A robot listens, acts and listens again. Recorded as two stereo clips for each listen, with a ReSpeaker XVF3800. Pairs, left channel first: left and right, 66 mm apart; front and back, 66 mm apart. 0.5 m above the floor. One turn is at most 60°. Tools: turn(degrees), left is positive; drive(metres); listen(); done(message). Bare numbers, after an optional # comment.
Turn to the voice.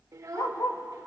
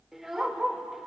# The child speaking: 95° right.
turn(-60)
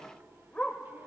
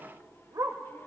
# Nothing new. It was at 35° right.
turn(-35)
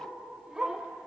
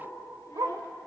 listen()
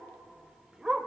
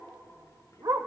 done("Facing where the child speaking came from. I can't hear it now.")